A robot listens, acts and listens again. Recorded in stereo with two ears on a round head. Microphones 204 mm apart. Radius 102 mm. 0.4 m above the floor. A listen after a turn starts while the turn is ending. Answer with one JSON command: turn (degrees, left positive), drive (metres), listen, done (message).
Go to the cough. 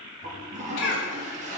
{"turn": 60}
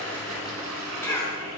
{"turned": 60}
{"turn": 15}
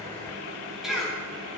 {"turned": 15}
{"drive": 1.0}
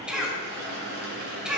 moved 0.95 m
{"drive": 1.0}
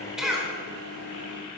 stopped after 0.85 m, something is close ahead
{"done": "I am next to the cough."}